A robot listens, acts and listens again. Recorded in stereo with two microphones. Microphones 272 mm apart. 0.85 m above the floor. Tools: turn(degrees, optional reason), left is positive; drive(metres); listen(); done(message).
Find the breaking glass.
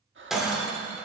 turn(degrees=30)
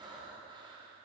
listen()
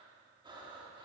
done("I heard breaking glass, but can't make it out now. It was about 30° right or 150° left.")